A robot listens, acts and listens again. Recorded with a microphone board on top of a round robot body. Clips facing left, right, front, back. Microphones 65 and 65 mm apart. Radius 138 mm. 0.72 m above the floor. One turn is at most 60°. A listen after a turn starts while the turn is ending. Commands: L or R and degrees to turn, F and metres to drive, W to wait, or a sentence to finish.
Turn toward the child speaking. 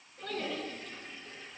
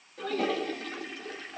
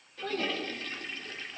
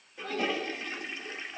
Found it: a child speaking, straight ahead.